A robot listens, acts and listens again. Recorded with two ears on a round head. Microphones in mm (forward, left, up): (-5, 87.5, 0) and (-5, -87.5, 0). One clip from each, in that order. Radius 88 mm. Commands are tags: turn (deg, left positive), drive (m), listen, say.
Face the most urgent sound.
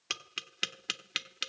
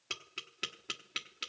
<listen/>
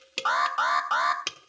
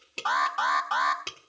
<turn deg="20"/>
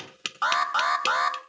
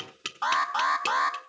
<turn deg="140"/>
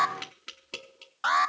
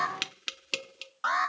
<turn deg="20"/>
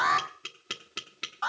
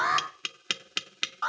<say>Facing the alarm.</say>